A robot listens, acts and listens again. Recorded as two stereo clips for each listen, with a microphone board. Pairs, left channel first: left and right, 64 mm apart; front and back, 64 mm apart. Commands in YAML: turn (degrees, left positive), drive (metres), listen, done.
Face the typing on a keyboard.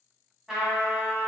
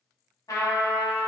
listen: true
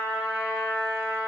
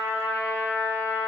listen: true
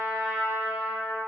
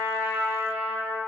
done: "I can't make out typing on a keyboard to turn to."